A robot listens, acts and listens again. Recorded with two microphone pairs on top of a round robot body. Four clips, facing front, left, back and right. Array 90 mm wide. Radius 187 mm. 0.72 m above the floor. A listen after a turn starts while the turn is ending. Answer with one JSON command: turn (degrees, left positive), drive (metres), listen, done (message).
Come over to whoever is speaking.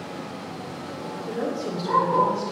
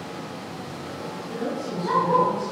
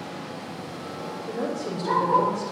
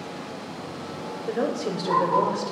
{"turn": -90}
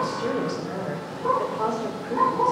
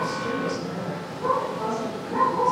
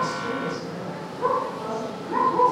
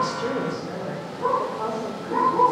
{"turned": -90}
{"turn": -20}
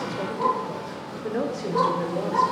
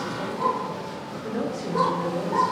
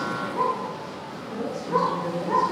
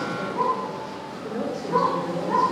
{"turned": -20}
{"drive": 1.0}
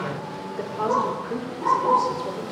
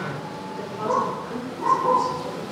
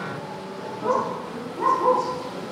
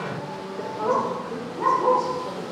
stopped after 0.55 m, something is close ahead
{"done": "Something is in my way. I am facing the woman speaking but have not reached it."}